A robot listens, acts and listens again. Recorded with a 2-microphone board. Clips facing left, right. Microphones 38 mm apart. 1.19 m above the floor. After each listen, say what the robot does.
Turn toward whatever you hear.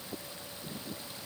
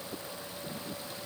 Keep listening.
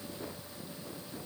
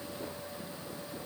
Keep listening.
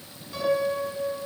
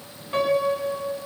Turn 45° right.
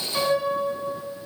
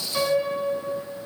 Found it: a piano, straight ahead.